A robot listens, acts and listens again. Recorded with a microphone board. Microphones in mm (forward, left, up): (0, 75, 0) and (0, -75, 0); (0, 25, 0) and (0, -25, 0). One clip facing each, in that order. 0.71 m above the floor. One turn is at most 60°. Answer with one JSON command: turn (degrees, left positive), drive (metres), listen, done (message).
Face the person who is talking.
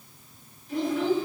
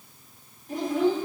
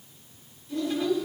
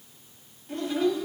{"turn": -45}
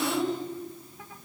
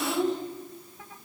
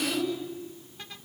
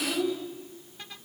{"done": "Found it: a child speaking, straight ahead."}